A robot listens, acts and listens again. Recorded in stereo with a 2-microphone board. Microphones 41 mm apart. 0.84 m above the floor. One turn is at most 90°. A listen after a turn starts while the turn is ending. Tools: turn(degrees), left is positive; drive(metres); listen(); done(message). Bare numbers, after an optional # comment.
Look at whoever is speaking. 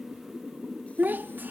# The child speaking: about 50° right or 130° right.
turn(-50)
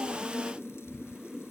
listen()
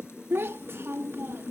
# So it is at 80° right.
turn(-80)
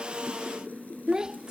# The child speaking is now 20° right.
turn(-20)
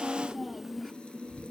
done("Facing the child speaking.")